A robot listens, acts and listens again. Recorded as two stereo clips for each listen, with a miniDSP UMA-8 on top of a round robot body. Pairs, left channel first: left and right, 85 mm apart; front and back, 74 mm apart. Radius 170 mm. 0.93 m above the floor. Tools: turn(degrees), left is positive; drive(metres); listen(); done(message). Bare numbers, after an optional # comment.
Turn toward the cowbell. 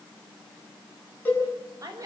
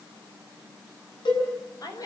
# The cowbell: 20° left.
turn(20)
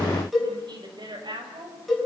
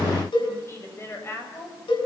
done("Found it: a cowbell, straight ahead, over 4 m away.")